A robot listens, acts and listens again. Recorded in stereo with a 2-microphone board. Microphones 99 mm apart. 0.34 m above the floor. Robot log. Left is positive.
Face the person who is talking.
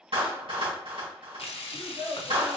note: The child speaking: about 45° right or 135° right.
cmd yaw -45
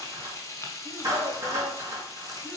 cmd idle
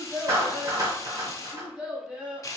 end: Found it: a child speaking, straight ahead, 1 to 2 m away.